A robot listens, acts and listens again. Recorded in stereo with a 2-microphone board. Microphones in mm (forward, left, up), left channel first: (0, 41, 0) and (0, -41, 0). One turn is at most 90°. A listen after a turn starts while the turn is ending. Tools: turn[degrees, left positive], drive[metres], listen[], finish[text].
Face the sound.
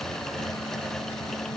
Action: listen[]
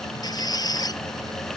Thought: The squeak: about 50° left or 130° left.
Action: turn[50]
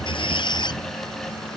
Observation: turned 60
Thought: So it is at 65° left.
Action: turn[65]
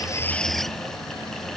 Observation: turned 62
Action: listen[]
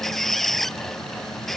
Action: finish[Facing the squeak.]